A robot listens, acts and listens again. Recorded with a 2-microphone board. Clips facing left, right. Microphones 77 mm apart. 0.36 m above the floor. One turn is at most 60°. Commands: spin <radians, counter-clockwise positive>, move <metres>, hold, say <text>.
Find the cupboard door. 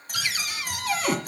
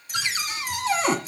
spin -0.52
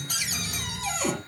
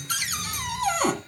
spin -1.05
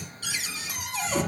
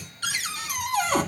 spin -1.05
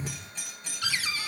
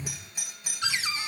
spin -0.35
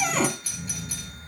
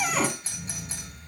say Found it: a cupboard door, straight ahead, 1 to 2 m away.